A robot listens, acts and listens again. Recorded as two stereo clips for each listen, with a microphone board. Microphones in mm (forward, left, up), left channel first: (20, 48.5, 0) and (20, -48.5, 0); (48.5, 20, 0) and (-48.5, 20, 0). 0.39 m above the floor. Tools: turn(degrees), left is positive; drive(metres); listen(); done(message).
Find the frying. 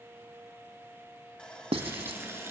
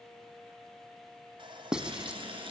turn(degrees=-155)
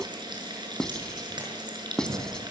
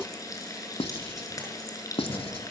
turn(degrees=-50)
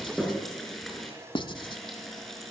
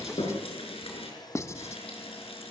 done("Facing the frying, over 4 m away.")